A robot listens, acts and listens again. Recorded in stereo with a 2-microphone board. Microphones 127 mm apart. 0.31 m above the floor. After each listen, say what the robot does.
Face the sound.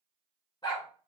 Turn 40° left.
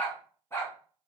Turn 25° left.
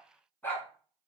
Turn 15° left.
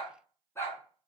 Turn 25° left.
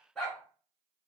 Found it: a dog barking, straight ahead, 1 to 2 m away.